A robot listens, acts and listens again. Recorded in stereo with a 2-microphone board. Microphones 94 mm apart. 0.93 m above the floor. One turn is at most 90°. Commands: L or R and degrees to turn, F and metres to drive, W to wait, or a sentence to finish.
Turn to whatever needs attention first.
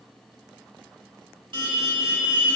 R55
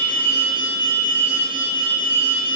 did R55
R60
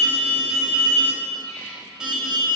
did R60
Facing the alarm, 1 to 2 m away.